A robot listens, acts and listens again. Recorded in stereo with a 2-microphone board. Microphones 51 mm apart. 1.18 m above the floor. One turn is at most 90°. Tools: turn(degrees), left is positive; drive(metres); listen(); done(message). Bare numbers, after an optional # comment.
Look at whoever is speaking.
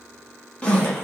listen()
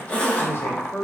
# The man speaking: about 45° left or 135° left.
turn(45)
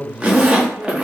# So it is at 10° left.
turn(10)
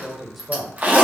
done("Found it: a man speaking, straight ahead.")